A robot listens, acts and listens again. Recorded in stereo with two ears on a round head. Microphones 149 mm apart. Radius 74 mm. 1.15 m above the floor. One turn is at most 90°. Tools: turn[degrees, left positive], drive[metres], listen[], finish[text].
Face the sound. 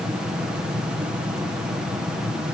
Action: listen[]
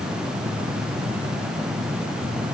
Action: listen[]
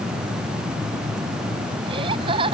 Thought: The laughter: about 30° right or 150° right.
Action: turn[-30]
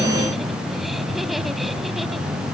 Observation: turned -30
Action: listen[]
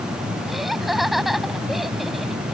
Action: finish[Found it: laughter, straight ahead.]